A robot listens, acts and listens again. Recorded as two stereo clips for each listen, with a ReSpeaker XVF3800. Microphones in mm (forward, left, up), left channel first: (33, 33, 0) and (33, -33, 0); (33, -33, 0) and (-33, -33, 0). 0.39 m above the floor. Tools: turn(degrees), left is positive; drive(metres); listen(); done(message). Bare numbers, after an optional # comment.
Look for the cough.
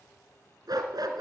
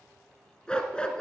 listen()
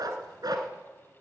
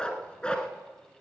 listen()
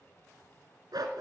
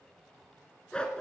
done("I can't make out a cough to turn to.")